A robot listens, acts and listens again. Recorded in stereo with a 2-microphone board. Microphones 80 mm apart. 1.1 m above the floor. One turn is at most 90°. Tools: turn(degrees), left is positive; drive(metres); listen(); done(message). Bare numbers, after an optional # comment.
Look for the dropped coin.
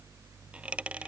turn(-30)
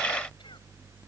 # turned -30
listen()
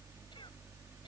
done("I heard a dropped coin, but can't make it out now. It was about 15° left or 135° right.")